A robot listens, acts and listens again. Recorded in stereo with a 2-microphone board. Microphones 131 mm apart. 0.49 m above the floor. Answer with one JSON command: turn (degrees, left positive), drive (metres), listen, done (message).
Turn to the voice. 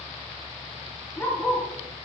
{"listen": true}
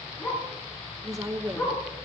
{"turn": -25}
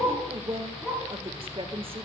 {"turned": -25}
{"turn": -125}
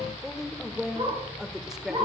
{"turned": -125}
{"done": "Facing the woman speaking."}